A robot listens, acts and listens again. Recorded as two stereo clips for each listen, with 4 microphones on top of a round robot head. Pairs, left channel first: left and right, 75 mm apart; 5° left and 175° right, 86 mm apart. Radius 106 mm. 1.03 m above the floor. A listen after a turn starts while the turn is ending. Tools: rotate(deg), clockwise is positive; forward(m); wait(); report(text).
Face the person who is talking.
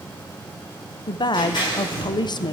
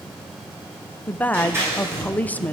rotate(-80)
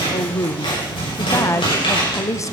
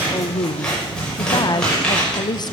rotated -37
rotate(-45)
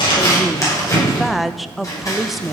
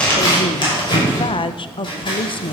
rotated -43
report("Facing the woman speaking.")